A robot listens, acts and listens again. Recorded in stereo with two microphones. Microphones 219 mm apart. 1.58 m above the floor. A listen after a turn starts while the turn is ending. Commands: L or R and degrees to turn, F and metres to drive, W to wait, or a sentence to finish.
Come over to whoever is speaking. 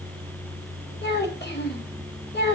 L45
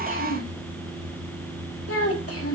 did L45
L85
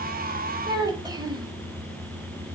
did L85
R15
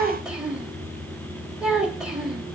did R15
F1.0
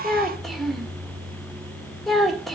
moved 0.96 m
F1.0
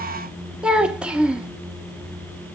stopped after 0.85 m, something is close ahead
Arrived at the child speaking, straight ahead.